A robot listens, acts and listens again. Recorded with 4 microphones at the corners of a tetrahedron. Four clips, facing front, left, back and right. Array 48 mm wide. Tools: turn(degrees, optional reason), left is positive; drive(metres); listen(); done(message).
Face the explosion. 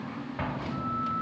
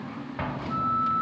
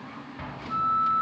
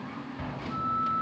turn(degrees=60, reason="The explosion: 60° left.")
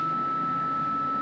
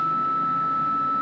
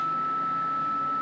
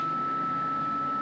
done("Facing where the explosion came from. I can't hear it now.")